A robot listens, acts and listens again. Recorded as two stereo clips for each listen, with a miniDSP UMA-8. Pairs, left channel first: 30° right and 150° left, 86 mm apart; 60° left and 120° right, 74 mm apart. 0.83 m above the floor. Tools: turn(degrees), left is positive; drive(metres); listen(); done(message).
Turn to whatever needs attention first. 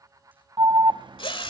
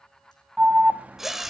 turn(degrees=170)
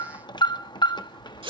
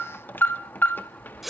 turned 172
done("Facing the alarm, under 1 m away.")